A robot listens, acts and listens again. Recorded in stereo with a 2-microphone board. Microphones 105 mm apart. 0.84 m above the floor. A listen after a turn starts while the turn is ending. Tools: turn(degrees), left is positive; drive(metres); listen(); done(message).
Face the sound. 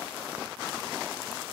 listen()
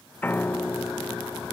turn(degrees=20)
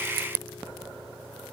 turn(degrees=145)
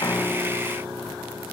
turn(degrees=-20)
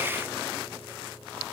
done("Facing the piano.")